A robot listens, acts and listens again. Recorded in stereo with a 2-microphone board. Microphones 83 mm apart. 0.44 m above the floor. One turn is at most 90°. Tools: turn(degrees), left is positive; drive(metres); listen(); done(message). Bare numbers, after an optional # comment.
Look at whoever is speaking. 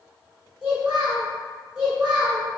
turn(-30)
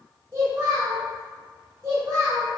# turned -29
# So it is at 135° right.
turn(-90)
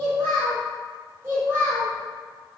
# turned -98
# The child speaking is now 40° right.
turn(-40)
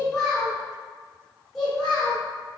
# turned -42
done("Facing the child speaking.")